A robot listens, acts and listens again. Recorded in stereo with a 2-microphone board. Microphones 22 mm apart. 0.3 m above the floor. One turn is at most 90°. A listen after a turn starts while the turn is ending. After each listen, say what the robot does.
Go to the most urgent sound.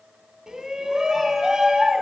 Turn 30° right.
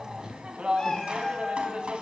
Turn 90° right.
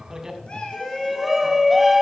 Turn 10° right.
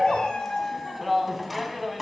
Drive 1.0 m forward.
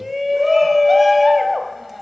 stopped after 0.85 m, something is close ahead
I am next to the shout.